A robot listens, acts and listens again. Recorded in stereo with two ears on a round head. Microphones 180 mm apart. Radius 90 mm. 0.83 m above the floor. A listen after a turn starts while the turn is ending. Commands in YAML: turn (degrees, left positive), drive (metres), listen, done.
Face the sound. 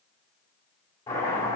turn: 30
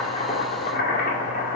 turn: 135
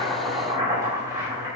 turn: -15
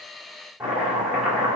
done: "Facing the chopping."